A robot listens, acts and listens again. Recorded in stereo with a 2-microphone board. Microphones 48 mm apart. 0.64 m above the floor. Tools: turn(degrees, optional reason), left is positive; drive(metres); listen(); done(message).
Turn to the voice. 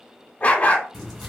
listen()
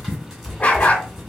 listen()
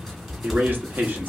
turn(degrees=-45, reason="The man speaking: about 45° right or 135° right.")
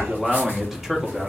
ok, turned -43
turn(degrees=-10, reason="So it is at 10° right.")
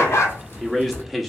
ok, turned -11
done("Facing the man speaking, under 1 m away.")